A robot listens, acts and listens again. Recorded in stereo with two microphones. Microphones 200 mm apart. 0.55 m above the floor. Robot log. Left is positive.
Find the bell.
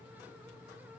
cmd idle
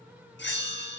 note: The bell: about 65° left or 115° left.
cmd yaw +65
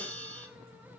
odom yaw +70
note: So it is at 10° left.
cmd yaw +10
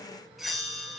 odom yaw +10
end: Found it: a bell, straight ahead.